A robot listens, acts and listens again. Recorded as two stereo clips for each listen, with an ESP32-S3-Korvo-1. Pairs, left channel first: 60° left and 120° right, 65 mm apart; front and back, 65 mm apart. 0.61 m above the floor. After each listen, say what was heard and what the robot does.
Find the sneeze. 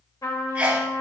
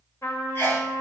The sneeze: 50° right. Turn 50° right.
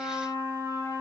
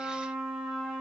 I heard a sneeze from this way, but can't make it out now.